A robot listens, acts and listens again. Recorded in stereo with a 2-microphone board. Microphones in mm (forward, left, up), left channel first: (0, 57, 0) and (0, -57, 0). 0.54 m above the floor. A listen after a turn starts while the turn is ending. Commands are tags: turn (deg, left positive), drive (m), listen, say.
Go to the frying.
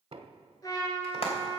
<turn deg="60"/>
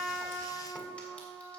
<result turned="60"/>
<listen/>
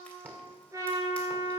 <listen/>
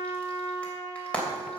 <turn deg="10"/>
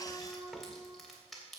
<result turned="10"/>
<listen/>
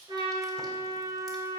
<listen/>
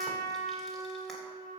<say>Facing where the frying came from. I can't hear it now. I did not reach it.</say>